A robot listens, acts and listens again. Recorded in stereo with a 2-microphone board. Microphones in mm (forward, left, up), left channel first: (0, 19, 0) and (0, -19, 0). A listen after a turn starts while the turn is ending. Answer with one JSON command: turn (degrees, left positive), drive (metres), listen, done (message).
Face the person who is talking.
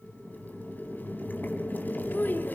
{"turn": 60}
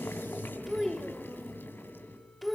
{"done": "Facing the child speaking."}